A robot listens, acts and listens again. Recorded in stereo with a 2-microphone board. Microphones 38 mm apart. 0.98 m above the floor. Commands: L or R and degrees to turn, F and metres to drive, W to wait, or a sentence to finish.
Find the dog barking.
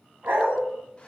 R65
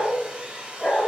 L25
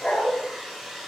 L25
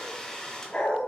L30
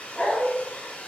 L15
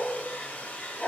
Found it: a dog barking, straight ahead, 2 to 4 m away.